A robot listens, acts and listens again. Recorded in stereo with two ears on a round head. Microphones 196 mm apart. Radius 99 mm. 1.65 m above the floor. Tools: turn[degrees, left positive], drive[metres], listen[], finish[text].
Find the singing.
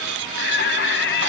Thought: The singing: about 55° left or 125° left.
Action: turn[55]
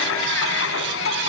Thought: So it is at 60° left.
Action: turn[60]
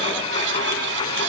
Action: listen[]
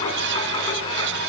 Action: listen[]
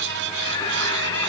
Thought: The singing is now 15° left.
Action: turn[15]
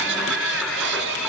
Action: finish[Found it: singing, straight ahead.]